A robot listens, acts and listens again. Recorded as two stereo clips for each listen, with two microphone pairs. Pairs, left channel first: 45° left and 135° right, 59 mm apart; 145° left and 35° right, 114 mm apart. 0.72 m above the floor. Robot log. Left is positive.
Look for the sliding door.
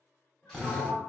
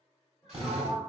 end: Facing the sliding door, under 1 m away.